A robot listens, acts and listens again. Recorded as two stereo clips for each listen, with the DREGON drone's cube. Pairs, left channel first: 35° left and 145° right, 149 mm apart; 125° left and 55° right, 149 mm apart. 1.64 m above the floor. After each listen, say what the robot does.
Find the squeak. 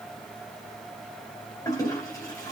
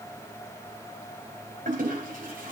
Keep listening.
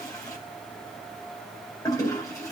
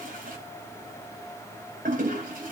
Keep listening.
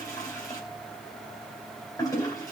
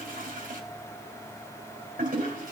I can't make out a squeak to turn to.